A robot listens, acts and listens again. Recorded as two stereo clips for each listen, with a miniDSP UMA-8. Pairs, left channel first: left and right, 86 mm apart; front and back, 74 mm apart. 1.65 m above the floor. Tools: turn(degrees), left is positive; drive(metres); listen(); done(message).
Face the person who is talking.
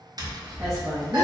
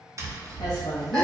turn(degrees=-30)
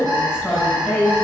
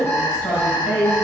done("Found it: a woman speaking, straight ahead.")